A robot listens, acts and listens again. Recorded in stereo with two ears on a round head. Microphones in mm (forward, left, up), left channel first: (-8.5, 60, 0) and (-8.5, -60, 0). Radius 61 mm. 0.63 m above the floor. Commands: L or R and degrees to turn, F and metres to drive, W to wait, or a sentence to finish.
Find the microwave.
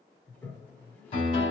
W
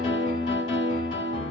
W
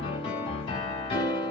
I can't make out a microwave, only a toilet flushing and a piano.